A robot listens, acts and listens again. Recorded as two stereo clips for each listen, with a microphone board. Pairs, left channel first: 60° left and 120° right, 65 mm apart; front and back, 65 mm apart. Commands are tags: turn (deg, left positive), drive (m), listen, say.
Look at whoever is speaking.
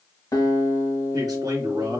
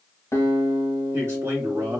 <turn deg="-130"/>
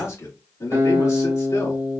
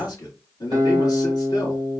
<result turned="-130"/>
<turn deg="20"/>
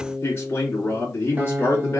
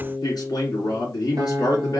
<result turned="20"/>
<turn deg="10"/>
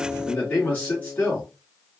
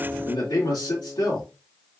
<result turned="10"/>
<say>Facing the man speaking, 2 to 4 m away.</say>